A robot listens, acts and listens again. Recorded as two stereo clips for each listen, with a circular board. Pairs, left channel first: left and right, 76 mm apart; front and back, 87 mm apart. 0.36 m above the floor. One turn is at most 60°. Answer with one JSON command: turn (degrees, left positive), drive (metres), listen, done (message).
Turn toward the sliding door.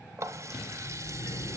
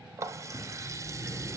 {"turn": 60}
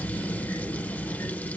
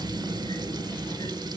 {"turn": 35}
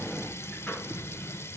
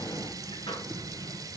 {"turn": 15}
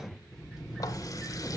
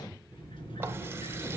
{"done": "Facing the sliding door, 2 to 4 m away."}